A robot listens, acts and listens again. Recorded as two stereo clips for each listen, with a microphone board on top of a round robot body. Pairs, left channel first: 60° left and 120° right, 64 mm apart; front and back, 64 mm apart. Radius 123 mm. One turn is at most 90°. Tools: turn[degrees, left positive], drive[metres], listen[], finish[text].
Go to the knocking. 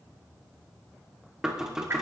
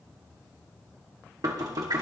Thought: The knocking: 160° left.
Action: turn[90]
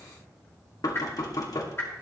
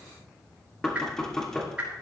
Thought: The knocking is now 80° left.
Action: turn[80]
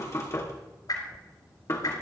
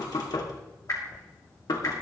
Thought: The knocking is now 15° left.
Action: turn[15]
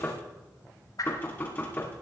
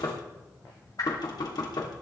Action: drive[1.0]
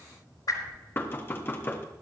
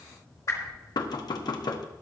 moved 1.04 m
Action: drive[1.0]
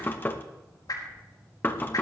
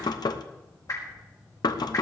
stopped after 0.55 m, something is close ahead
Action: finish[Arrived at the knocking, straight ahead.]